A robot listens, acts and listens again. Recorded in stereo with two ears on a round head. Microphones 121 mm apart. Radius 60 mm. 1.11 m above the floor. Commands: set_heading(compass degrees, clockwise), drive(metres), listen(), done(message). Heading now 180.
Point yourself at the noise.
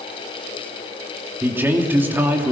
set_heading(195)
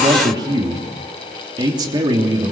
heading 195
set_heading(340)
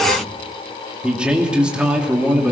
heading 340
set_heading(350)
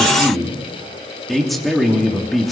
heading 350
done("Found it: a man speaking, straight ahead, 2 to 4 m away.")